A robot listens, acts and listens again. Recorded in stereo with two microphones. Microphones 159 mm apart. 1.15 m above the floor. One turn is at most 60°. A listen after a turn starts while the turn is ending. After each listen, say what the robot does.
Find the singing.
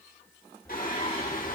Turn 60° left.
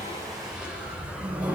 Keep listening.
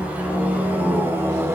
Turn 15° right.
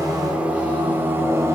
Turn 15° right.
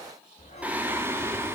Turn 15° right.
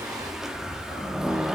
Found it: singing, straight ahead.